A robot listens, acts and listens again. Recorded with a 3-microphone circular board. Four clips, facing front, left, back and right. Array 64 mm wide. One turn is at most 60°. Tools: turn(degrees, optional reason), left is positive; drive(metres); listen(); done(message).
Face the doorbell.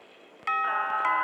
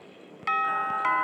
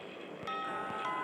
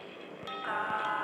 turn(degrees=50, reason="The doorbell: 50° left.")
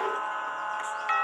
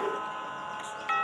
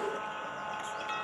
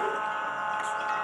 turn(degrees=20, reason="The doorbell is now 20° left.")
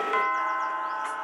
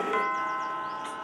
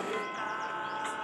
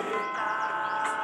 done("Facing the doorbell.")